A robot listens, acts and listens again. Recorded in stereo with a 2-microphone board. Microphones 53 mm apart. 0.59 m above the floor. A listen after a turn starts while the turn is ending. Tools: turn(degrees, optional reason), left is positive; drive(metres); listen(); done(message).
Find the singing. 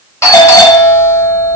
listen()
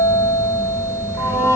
turn(degrees=90)
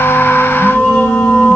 turn(degrees=20, reason="So it is at 20° left.")
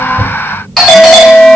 listen()
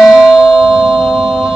listen()
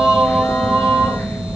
turn(degrees=10, reason="The singing is now 10° left.")
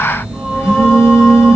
listen()
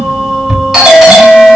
done("Found it: singing, straight ahead, 2 to 4 m away.")